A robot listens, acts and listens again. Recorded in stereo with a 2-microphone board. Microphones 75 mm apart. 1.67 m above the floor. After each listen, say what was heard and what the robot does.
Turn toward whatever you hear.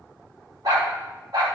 The dog barking: about 60° right or 120° right. Turn 60° right.
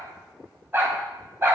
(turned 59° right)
So it is at 35° right. Turn 35° right.
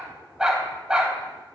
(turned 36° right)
The dog barking is now 15° right. Turn 15° right.
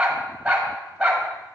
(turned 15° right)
The dog barking is now 15° right. Turn 15° right.
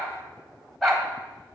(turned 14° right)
Facing the dog barking, 2 to 4 m away.